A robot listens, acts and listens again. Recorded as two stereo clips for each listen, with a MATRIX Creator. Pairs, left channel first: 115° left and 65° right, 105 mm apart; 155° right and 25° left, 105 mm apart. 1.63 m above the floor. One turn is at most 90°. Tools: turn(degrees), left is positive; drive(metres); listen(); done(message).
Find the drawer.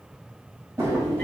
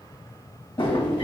turn(degrees=-90)
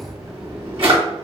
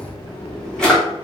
turn(degrees=-75)
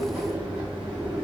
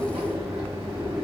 turn(degrees=10)
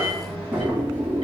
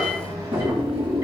done("Facing the drawer.")